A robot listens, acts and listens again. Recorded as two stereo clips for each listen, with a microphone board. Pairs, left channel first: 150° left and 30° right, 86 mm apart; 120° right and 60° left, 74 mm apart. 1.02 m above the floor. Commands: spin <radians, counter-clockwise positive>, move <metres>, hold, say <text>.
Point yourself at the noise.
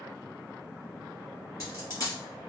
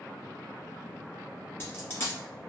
spin -2.97
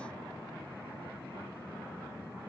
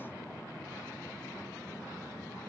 say I heard a dropped coin from this way, but can't make it out now.